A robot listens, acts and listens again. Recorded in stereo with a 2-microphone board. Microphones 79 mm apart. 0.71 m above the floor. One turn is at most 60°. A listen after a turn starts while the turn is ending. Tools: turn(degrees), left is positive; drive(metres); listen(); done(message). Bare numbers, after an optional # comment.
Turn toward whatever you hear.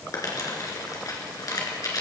# The crumpling: about 50° left or 130° left.
turn(50)
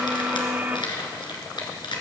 # So it is at 80° left.
turn(60)
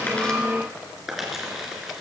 done("Found it: crumpling, straight ahead, 2 to 4 m away.")